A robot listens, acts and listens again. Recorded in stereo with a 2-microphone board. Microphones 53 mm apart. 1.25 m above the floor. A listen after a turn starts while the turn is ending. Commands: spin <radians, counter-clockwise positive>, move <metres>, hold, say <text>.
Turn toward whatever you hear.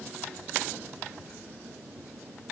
hold
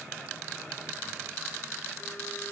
hold
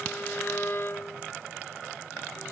spin 0.79
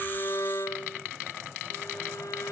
spin 1.48
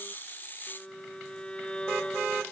spin 0.35
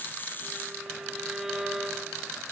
say Facing the violin.